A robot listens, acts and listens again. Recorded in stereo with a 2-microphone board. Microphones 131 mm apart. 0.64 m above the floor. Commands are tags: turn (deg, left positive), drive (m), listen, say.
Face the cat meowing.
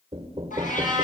<turn deg="90"/>
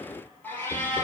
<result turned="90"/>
<turn deg="15"/>
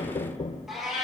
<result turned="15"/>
<say>Found it: a cat meowing, straight ahead, over 4 m away.</say>